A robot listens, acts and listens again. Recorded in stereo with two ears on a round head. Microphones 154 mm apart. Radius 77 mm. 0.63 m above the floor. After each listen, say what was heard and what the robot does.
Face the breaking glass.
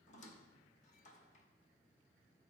Keep listening.
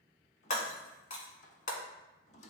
The breaking glass: about 45° left or 135° left. Turn 45° left.
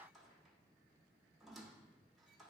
Keep listening.
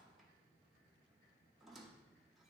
I heard breaking glass, but can't make it out now. It was about straight ahead or 90° left.